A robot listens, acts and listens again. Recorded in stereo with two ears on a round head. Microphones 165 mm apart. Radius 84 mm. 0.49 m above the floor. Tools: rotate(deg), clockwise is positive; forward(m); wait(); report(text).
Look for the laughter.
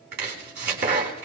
wait()
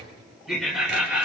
rotate(30)
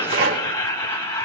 rotate(-15)
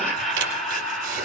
report("Found it: laughter, straight ahead, 2 to 4 m away.")